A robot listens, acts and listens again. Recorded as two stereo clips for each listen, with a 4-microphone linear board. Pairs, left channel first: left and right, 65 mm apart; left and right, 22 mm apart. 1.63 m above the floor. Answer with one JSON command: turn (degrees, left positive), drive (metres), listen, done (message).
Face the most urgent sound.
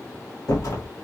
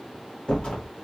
{"listen": true}
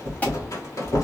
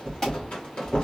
{"turn": 25}
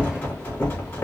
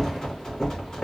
{"listen": true}
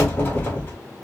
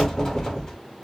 {"done": "Found it: an alarm, straight ahead, 1 to 2 m away."}